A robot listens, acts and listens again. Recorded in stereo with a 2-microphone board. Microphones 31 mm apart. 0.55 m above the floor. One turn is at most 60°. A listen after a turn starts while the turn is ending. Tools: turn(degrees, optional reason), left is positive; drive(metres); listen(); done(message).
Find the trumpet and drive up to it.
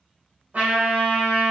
turn(degrees=-60, reason="The trumpet: about 60° right or 120° right.")
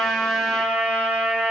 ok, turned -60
turn(degrees=-55, reason="So it is at 55° right.")
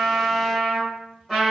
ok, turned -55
drive(metres=1.0)
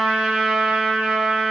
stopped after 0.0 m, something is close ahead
turn(degrees=-10, reason="The trumpet is now 10° right.")
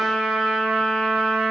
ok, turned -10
done("Blocked. The trumpet is further on, straight ahead.")